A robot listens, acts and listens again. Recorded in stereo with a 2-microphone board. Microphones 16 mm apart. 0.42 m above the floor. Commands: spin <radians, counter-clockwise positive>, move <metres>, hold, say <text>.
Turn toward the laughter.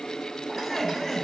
spin 0.70
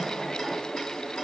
hold
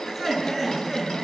spin 0.35
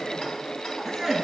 say Found it: laughter, straight ahead.